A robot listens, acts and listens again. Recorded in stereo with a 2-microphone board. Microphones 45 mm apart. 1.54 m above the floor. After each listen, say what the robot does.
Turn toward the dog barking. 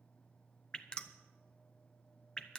Keep listening.
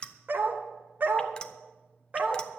Turn 35° right.
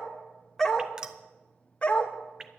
Turn 30° left.
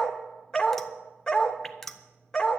Turn 15° left.
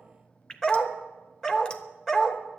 Turn 10° left.
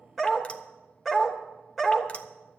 Found it: a dog barking, straight ahead, 1 to 2 m away.